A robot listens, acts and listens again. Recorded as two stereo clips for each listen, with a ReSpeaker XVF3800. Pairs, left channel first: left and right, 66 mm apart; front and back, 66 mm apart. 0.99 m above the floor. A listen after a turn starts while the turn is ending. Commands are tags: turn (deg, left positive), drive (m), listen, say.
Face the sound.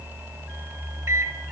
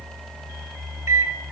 <turn deg="-135"/>
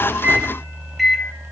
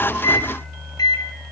<say>Facing the microwave.</say>